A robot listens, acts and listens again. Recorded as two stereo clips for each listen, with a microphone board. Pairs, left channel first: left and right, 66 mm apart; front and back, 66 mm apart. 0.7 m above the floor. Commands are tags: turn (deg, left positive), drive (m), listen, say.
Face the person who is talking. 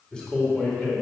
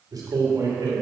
<turn deg="160"/>
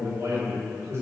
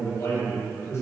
<turn deg="-50"/>
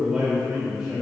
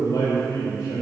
<turn deg="-20"/>
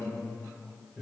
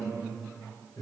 <turn deg="-10"/>
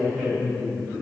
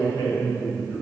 <say>Facing the man speaking, 2 to 4 m away.</say>